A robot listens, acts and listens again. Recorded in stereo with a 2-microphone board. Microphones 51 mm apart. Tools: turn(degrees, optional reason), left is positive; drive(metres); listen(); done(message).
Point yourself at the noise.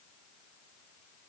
listen()
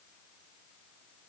listen()
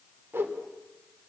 turn(degrees=-45, reason="The whoosh: about 45° right or 135° right.")
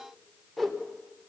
done("Found it: a whoosh, straight ahead.")